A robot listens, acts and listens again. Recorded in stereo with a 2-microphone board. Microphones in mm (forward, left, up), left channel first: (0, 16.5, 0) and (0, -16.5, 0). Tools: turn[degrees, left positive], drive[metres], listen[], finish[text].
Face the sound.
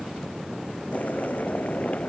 Thought: The boiling: about 50° left or 130° left.
Action: turn[50]
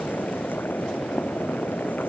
Thought: So it is at 80° left.
Action: turn[80]
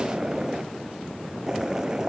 Thought: The boiling is now 20° right.
Action: turn[-20]
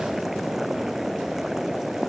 Thought: The boiling is now 10° right.
Action: turn[-10]
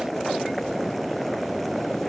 Action: finish[Found it: boiling, straight ahead.]